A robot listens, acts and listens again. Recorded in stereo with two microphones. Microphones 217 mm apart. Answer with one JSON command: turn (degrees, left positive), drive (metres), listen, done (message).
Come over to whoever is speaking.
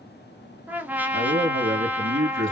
{"turn": -65}
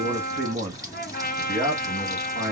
{"turn": -50}
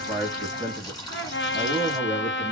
{"turn": -15}
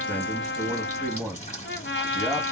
{"drive": 1.0}
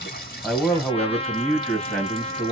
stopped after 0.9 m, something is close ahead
{"done": "I am next to the man speaking."}